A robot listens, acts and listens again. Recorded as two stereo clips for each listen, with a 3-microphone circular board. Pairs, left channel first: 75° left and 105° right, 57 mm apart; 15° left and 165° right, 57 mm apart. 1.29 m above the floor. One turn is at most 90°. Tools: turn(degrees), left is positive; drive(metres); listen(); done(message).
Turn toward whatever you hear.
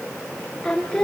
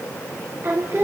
turn(degrees=90)
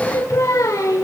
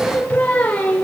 turn(degrees=80)
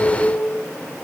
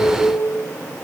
turn(degrees=35)
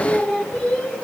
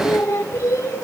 turn(degrees=10)
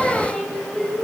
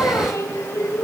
done("Found it: singing, straight ahead, over 4 m away.")